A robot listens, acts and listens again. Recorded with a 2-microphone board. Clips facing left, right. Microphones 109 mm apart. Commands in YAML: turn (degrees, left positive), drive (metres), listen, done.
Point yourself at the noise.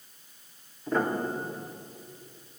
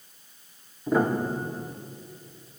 turn: -30
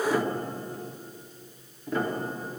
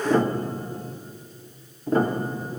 turn: -145
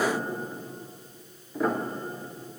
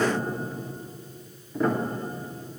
done: "Facing the piano, under 1 m away."